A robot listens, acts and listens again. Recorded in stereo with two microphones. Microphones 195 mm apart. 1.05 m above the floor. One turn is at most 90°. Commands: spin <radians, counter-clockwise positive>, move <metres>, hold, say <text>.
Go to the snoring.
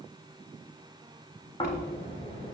spin 0.52
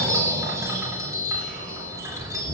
spin 1.57
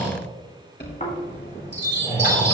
spin 0.79
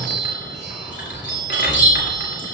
move 1.0
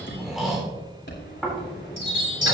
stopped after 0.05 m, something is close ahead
say Blocked. The snoring is further on, straight ahead.